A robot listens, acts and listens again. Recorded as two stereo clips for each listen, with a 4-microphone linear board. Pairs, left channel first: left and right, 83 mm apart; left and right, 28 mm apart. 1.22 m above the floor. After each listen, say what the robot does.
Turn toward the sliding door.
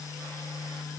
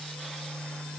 Keep listening.
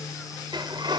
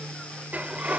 Turn 65° right.
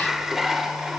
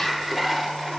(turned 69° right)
Facing the sliding door.